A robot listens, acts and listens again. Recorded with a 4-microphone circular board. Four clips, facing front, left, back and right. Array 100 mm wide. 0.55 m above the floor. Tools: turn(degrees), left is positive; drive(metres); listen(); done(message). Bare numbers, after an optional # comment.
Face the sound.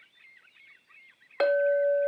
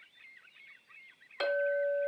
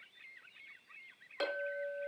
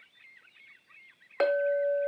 # The clink: 45° right.
turn(-45)
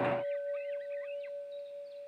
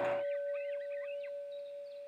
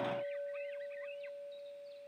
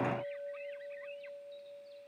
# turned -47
done("Facing the clink, under 1 m away.")